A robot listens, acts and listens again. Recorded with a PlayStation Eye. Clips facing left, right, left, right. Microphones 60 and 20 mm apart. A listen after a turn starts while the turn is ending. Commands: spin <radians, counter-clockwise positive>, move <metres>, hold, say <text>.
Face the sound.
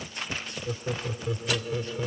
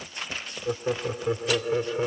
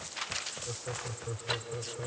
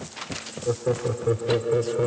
spin -0.61
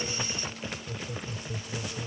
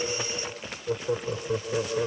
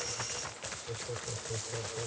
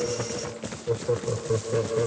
spin -1.83
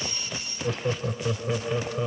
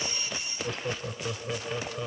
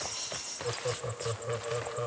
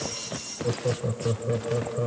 spin 0.26
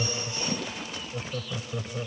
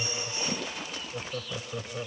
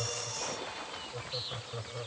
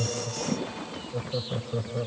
say Found it: laughter, straight ahead.